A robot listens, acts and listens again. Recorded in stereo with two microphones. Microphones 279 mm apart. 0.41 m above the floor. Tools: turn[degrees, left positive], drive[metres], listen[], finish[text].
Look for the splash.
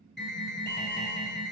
Action: listen[]
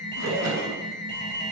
Thought: The splash: about 65° right or 115° right.
Action: turn[-65]
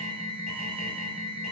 Action: listen[]
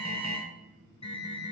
Action: finish[I heard a splash, but can't make it out now. It was about straight ahead or 50° right.]